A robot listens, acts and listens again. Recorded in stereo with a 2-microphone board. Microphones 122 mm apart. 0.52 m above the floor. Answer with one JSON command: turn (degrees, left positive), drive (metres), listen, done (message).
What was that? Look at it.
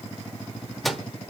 {"turn": 30}
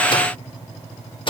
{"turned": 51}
{"turn": 130}
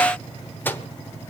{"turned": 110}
{"turn": 20}
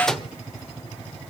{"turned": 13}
{"done": "Facing the microwave, 1 to 2 m away."}